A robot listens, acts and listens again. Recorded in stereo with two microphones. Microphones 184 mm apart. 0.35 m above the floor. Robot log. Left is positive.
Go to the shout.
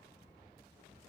cmd idle
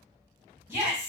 note: The shout: about 15° right or 165° right.
cmd yaw -15
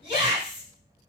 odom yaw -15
note: So it is at 150° right.
cmd yaw -150
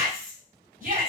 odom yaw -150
note: The shout is now 60° right.
cmd yaw -60
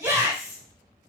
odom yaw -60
note: The shout is now 15° right.
cmd yaw -15
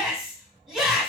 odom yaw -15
cmd fwd 1.0
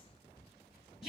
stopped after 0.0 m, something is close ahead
end: Blocked. The shout is further on, straight ahead.